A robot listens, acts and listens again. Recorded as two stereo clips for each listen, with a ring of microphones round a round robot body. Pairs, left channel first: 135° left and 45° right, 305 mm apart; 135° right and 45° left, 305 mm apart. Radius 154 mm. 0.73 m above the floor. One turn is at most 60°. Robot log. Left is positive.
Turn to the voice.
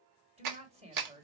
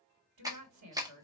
note: The woman speaking: 25° left.
cmd yaw +25
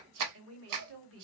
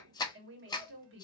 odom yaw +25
end: Found it: a woman speaking, straight ahead, 1 to 2 m away.